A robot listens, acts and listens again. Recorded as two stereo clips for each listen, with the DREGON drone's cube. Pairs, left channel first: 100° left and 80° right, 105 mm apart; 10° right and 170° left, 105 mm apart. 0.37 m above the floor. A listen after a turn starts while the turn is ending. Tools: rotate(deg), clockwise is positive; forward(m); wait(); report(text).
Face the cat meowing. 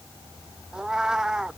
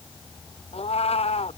report("Found it: a cat meowing, straight ahead.")